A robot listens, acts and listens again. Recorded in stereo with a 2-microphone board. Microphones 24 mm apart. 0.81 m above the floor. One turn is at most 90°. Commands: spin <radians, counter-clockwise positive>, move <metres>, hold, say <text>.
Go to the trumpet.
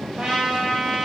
spin -0.61
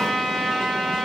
move 1.0
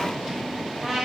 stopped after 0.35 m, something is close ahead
say Blocked. The trumpet is further on, straight ahead.